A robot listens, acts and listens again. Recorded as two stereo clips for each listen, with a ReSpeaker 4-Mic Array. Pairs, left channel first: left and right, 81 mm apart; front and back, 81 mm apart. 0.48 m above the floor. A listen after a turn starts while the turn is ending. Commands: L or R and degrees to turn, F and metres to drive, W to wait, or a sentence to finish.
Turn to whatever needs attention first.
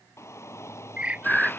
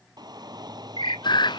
L145
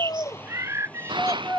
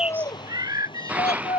L15
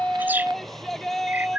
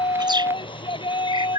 Facing the shout.